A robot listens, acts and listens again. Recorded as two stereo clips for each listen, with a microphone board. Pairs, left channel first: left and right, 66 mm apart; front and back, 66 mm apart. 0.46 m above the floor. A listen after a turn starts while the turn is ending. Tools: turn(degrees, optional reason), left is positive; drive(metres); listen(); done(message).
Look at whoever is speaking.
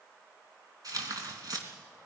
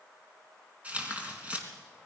listen()
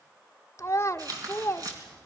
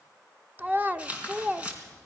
turn(degrees=125, reason="The child speaking: 125° left.")
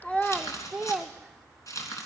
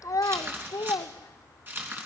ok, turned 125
done("Facing the child speaking.")